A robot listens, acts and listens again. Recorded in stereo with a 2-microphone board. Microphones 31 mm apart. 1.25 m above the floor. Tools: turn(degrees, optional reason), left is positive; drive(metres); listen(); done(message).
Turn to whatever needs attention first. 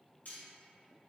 listen()
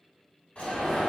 turn(degrees=45, reason="The alarm: about 45° left or 135° left.")
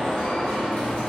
turn(degrees=90, reason="So it is at 90° left.")
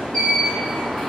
turn(degrees=30, reason="The alarm is now 30° left.")
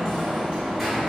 done("Facing the alarm, 1 to 2 m away.")